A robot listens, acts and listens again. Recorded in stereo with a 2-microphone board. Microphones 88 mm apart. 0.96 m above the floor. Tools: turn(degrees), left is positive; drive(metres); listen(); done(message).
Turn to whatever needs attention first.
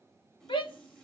turn(degrees=90)
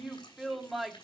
done("Facing the shout, 1 to 2 m away.")